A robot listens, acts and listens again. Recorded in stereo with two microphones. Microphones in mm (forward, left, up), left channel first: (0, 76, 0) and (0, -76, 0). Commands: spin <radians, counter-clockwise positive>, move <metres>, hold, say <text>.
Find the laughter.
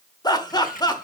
spin 0.44
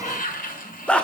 spin 0.17
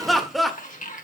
say Found it: laughter, straight ahead, 1 to 2 m away.